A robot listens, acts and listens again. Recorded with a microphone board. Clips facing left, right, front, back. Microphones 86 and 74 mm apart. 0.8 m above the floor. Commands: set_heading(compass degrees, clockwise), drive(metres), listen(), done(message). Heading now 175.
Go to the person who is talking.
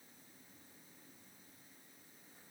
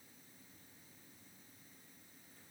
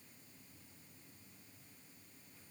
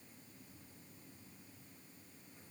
listen()
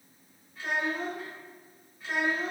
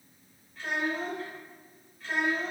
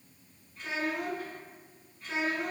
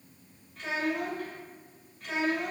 set_heading(5)
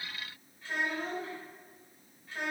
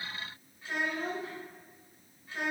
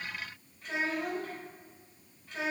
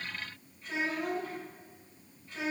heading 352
set_heading(7)
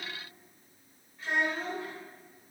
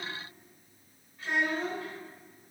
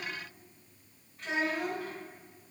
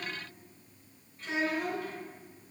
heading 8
drive(1.0)
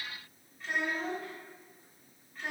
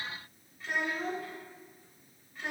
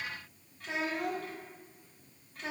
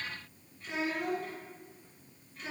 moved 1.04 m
drive(1.0)
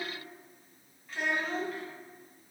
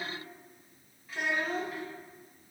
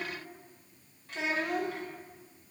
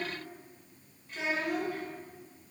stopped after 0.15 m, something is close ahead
done("I am next to the child speaking.")